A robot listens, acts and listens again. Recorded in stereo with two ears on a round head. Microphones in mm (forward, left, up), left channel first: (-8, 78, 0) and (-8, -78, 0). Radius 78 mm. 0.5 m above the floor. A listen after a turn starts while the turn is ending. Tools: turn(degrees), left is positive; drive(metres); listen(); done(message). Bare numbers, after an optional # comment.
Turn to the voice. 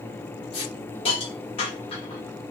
listen()
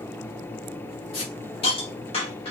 listen()
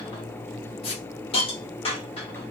done("I can't make out anyone speaking, only a hiss.")